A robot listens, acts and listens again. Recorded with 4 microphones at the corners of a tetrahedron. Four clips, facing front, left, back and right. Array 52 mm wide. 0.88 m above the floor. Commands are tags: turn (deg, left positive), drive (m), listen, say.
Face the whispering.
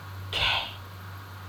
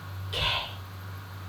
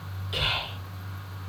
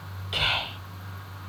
<turn deg="-55"/>
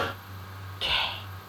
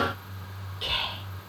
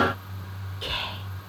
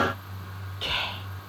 <turn deg="-25"/>
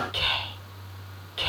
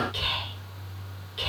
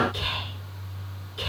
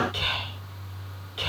<turn deg="-20"/>
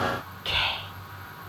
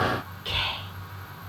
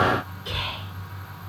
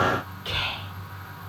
<say>Found it: whispering, straight ahead, 1 to 2 m away.</say>